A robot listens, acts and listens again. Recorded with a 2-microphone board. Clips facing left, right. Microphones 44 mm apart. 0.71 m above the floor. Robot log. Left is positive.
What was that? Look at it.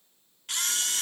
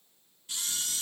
note: The camera shutter: about 65° left or 115° left.
cmd yaw +65
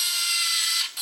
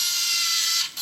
note: So it is at 10° left.
cmd yaw +10
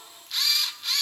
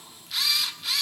end: Facing the camera shutter.